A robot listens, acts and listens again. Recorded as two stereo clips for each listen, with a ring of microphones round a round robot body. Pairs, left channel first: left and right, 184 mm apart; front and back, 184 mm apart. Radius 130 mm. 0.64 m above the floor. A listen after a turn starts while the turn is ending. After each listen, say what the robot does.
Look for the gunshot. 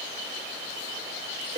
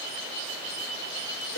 Keep listening.
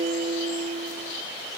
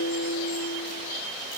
Keep listening.
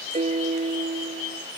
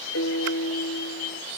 I can't make out a gunshot, only a piano.